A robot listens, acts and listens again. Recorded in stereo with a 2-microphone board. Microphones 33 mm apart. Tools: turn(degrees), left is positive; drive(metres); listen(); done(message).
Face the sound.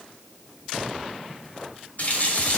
turn(degrees=50)
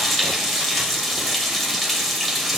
done("Found it: a running tap, straight ahead.")